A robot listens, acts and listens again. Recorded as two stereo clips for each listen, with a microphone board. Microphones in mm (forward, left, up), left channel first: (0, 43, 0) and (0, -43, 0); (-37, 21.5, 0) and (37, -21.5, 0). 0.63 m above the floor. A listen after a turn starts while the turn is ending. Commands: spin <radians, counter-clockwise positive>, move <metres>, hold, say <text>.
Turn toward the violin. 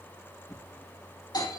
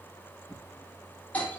hold
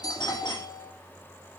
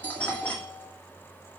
hold
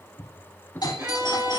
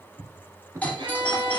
spin -0.61
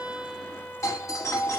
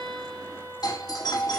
spin 0.26
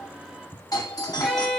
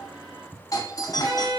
say Facing the violin.